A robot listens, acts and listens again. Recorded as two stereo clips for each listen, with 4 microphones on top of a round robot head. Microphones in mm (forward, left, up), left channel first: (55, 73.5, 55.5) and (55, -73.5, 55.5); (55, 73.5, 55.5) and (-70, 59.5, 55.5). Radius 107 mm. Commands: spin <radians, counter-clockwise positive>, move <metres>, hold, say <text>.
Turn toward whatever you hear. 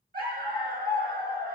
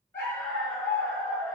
spin -1.31
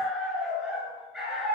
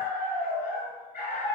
say Found it: a dog barking, straight ahead.